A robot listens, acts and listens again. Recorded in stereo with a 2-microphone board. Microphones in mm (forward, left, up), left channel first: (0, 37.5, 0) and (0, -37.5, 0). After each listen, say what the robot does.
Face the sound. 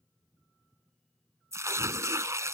Turn 45° right.
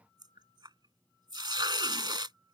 Turn 95° right.
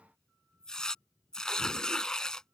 Turn 10° left.
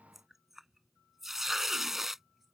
Found it: tearing paper, straight ahead.